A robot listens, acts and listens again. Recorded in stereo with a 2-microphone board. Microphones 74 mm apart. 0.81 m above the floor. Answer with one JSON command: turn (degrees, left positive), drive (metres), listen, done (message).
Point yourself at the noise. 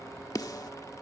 {"turn": 60}
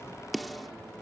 {"done": "Found it: a snare drum, straight ahead."}